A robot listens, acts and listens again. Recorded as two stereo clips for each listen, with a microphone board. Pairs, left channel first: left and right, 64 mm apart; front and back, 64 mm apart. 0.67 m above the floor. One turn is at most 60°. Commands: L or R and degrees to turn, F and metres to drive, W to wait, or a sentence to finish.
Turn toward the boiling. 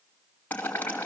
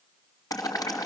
L25
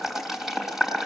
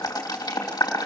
Found it: boiling, straight ahead.